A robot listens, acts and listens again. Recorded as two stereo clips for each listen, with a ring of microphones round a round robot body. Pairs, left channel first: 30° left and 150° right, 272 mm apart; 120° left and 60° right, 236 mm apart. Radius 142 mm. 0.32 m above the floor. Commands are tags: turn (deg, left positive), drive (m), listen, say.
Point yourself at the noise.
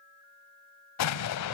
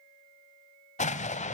<turn deg="60"/>
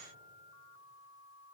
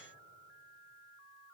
<say>I heard an explosion from this way, but can't make it out now.</say>